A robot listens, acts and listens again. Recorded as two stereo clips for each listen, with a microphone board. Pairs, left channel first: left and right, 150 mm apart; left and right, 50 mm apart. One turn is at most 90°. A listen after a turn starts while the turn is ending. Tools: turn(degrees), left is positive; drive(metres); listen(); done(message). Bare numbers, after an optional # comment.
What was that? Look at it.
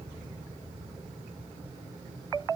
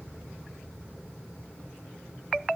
listen()
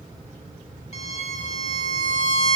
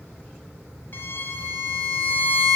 # The violin: about 50° left or 130° left.
turn(50)
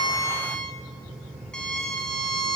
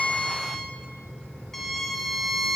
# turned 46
done("Found it: a violin, straight ahead.")